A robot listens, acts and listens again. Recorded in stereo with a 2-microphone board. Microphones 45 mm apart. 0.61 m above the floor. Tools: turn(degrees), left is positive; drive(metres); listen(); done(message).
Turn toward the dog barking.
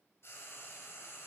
listen()
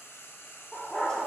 turn(degrees=30)
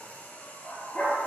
turn(degrees=145)
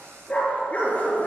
turn(degrees=35)
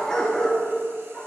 turn(degrees=15)
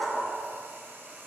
done("Found it: a dog barking, straight ahead, 2 to 4 m away.")